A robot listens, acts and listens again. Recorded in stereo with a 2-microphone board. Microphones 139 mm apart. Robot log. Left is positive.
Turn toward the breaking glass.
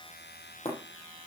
note: The breaking glass: about 45° left or 135° left.
cmd yaw +45
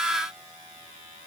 cmd idle
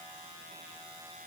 end: I heard breaking glass, but can't make it out now. It was about straight ahead or 90° left.